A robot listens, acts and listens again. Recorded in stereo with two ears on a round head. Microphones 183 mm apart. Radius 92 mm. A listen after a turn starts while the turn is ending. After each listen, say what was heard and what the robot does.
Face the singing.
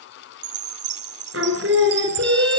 The singing: about 70° right or 110° right. Turn 70° right.
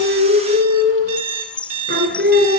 So it is at 55° right. Turn 55° right.
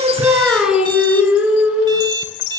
Found it: singing, straight ahead.